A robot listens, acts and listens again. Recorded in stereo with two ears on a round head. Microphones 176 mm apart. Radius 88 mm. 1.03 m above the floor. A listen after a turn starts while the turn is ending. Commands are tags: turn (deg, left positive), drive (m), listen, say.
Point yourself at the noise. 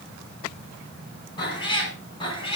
<turn deg="30"/>
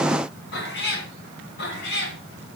<turn deg="115"/>
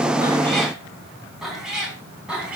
<say>Found it: a cat meowing, straight ahead.</say>